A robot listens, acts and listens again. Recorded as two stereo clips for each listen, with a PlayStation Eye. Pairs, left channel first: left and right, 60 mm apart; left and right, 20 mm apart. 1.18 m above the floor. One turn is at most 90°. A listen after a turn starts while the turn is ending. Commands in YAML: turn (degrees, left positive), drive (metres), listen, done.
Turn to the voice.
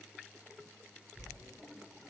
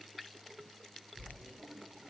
listen: true
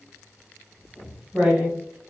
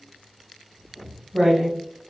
listen: true
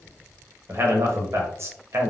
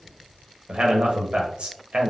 turn: -50
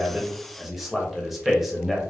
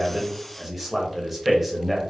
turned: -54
done: "Facing the man speaking, under 1 m away."